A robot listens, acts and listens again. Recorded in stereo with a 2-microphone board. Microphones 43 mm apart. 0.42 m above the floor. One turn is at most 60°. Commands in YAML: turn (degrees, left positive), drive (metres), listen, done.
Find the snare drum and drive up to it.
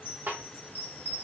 turn: -55
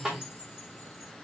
turn: -15
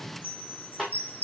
drive: 1.0
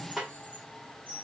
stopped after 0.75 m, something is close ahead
done: "Arrived at the snare drum, straight ahead."